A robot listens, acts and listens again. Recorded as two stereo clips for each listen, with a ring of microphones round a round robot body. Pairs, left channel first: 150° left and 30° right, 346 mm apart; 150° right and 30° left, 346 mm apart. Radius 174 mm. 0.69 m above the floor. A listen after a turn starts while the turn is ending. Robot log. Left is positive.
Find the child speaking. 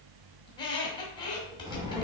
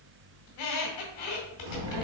note: The child speaking: 50° left.
cmd yaw +50
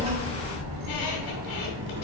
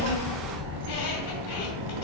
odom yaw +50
note: The child speaking is now 30° left.
cmd yaw +30
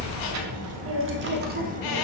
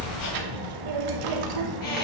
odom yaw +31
note: The child speaking is now 40° left.
cmd yaw +40
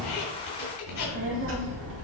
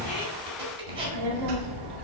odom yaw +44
note: The child speaking is now 25° left.
cmd yaw +25
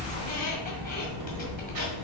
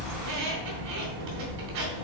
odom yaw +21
end: Found it: a child speaking, straight ahead.